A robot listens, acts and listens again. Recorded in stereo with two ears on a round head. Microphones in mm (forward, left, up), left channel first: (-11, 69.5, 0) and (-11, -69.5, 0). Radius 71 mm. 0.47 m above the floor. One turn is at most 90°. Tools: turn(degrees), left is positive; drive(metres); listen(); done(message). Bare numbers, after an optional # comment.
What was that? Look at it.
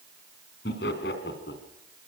turn(90)
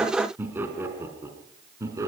# So it is at 20° right.
turn(-20)
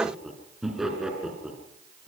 done("Found it: laughter, straight ahead, over 4 m away.")